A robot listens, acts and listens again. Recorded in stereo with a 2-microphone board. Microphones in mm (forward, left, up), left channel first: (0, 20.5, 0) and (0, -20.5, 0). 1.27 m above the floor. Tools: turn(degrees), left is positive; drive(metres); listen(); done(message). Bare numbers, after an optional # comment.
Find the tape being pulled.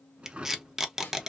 turn(-30)
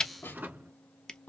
# So it is at 20° left.
turn(20)
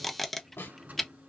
done("Facing the tape being pulled.")